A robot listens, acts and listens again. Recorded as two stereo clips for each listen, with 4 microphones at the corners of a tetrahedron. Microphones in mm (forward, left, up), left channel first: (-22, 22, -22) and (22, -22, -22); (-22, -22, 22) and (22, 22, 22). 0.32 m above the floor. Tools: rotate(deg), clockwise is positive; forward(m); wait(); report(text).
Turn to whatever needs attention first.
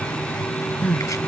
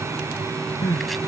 rotate(160)
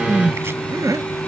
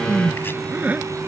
rotate(20)
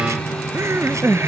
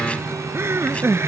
report("Facing the crying.")